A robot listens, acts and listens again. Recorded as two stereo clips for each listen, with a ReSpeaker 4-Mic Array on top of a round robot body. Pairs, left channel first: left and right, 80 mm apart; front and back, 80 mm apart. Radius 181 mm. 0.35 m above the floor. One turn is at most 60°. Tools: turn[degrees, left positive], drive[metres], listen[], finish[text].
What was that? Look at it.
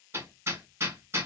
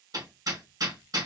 Thought: The hammering: 145° right.
Action: turn[-60]
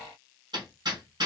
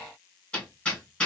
Thought: The hammering is now 75° right.
Action: turn[-60]
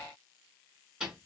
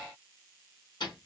Thought: The hammering is now 10° right.
Action: turn[-10]
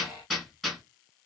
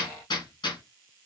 Action: finish[Facing the hammering, 1 to 2 m away.]